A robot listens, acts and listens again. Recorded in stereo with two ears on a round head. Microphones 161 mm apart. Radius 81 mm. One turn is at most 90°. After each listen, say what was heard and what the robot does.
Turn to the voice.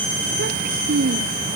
The child speaking: about 55° right or 125° right. Turn 55° right.
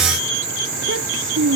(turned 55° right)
So it is at 70° right. Turn 70° right.
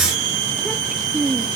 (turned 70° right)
Facing the child speaking.